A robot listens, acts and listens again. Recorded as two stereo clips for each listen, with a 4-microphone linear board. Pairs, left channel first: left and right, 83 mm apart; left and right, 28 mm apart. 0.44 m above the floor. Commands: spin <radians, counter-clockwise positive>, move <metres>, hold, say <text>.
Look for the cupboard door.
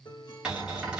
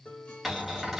spin -0.52
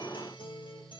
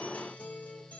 hold
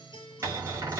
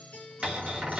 spin -2.44
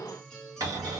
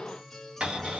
spin -0.96
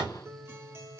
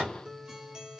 spin -0.26
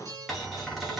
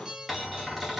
say Facing the cupboard door.